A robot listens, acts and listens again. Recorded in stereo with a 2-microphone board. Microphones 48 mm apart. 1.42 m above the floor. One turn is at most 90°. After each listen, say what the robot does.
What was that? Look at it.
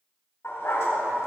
Turn 70° left.
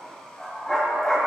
Turn 15° left.
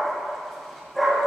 Facing the dog barking.